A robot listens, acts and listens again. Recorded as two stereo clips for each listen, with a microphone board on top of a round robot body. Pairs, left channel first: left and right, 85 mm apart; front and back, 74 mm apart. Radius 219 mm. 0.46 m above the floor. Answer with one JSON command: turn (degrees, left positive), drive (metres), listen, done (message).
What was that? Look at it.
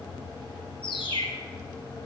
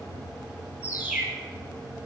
{"turn": 110}
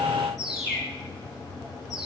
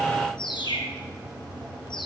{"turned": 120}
{"turn": -10}
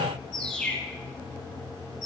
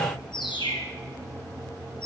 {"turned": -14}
{"done": "Found it: a bird, straight ahead."}